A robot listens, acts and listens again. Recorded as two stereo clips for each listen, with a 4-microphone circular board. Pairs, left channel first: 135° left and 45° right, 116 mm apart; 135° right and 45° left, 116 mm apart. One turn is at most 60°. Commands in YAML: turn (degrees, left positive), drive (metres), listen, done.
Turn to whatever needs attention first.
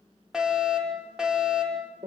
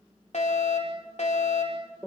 turn: -60
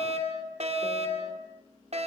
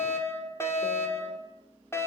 turn: -60
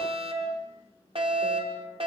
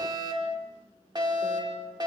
turn: -10
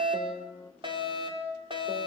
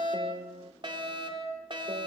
done: "Facing the fire alarm, over 4 m away."